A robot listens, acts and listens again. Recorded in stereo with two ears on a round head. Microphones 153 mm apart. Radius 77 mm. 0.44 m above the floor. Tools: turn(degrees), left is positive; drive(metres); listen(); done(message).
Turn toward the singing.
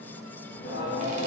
turn(degrees=60)
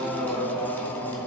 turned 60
turn(degrees=15)
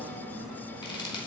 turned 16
done("Found it: singing, straight ahead.")